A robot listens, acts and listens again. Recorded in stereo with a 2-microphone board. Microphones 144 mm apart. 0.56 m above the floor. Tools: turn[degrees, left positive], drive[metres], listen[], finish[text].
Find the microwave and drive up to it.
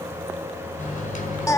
Thought: The microwave: about 65° left or 115° left.
Action: turn[65]
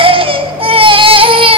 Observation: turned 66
Action: listen[]
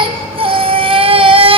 Action: listen[]
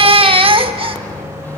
Thought: So it is at 15° left.
Action: turn[15]
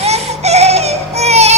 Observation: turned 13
Action: listen[]
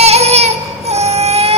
Action: listen[]
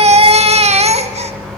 Action: drive[1.0]
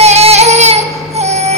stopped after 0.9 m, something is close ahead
Action: listen[]
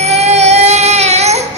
Action: listen[]
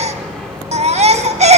Action: finish[I am next to the microwave.]